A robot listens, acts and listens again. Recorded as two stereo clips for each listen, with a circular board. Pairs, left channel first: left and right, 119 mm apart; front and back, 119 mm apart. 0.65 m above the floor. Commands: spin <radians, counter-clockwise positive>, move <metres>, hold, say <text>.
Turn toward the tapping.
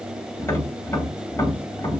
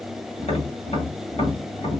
spin 0.44
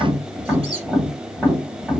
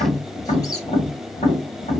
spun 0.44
spin -0.17
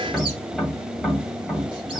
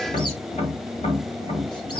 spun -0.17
say Facing the tapping.